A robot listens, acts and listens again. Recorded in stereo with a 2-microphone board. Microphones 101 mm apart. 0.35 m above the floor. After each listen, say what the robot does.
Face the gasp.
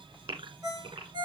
Turn 65° right.
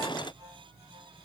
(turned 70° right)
Keep listening.
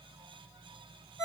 I heard a gasp, but can't make it out now. It was about 5° left or 45° right.